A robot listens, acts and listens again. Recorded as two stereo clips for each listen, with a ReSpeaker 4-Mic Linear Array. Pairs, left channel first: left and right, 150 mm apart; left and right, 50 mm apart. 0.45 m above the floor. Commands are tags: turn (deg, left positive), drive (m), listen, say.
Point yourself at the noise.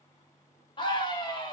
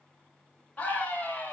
<turn deg="35"/>
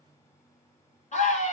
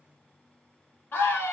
<turn deg="105"/>
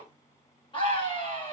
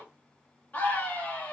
<turn deg="45"/>
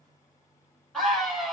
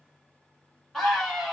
<say>Found it: a scream, straight ahead, 1 to 2 m away.</say>